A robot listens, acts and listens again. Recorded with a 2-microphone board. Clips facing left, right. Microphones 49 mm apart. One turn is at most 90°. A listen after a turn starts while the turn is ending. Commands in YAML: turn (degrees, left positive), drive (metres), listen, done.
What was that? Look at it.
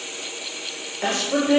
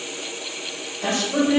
turn: 55
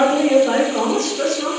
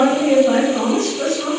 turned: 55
turn: 50
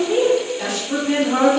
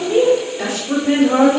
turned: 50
turn: -30
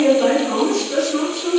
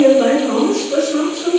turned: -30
turn: -15
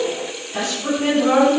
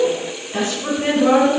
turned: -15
turn: -15
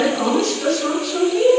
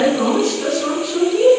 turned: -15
done: "Found it: a woman speaking, straight ahead, 2 to 4 m away."